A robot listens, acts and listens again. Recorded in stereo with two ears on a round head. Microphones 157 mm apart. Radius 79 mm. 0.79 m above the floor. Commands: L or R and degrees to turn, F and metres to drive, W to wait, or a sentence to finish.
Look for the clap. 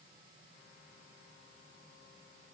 W
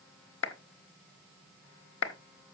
L90
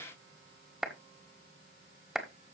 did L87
Found it: a clap, straight ahead, 1 to 2 m away.